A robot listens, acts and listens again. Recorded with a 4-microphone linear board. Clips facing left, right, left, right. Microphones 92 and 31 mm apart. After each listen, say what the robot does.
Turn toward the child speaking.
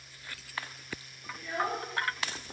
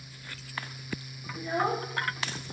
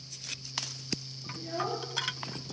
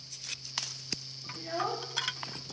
Turn 25° right.
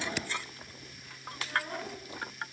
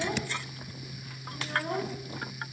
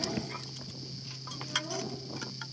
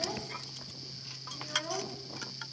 Turn 130° right.
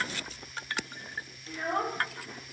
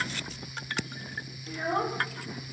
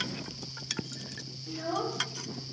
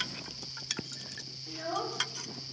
Turn 10° right.
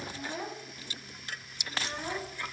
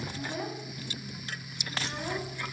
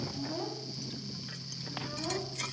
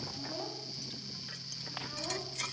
Found it: a child speaking, straight ahead, 1 to 2 m away.